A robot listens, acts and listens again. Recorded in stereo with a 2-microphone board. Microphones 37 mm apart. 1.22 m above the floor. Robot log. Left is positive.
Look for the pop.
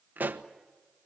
note: The pop: about 55° right or 125° right.
cmd yaw -55
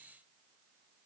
cmd idle
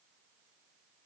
end: I heard a pop, but can't make it out now. It was about straight ahead or 70° right.